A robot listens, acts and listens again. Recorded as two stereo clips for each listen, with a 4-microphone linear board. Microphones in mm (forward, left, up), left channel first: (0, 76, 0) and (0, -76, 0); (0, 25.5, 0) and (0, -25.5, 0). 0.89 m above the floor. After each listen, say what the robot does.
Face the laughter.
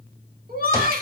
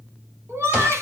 Turn 90° right.
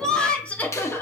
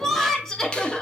Turn 15° left.
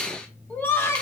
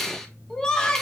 Turn 15° left.
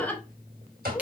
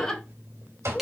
Turn 10° left.
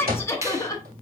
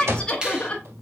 Turn 25° left.
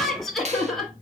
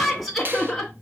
Found it: laughter, straight ahead.